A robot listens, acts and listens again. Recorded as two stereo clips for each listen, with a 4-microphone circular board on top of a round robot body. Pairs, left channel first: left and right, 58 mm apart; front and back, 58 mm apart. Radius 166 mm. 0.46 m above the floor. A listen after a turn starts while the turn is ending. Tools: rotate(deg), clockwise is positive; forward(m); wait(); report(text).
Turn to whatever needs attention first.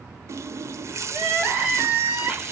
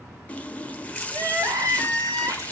rotate(160)
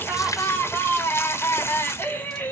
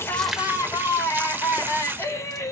rotate(-35)
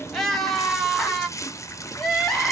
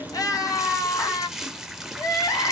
report("Facing the crying, 1 to 2 m away.")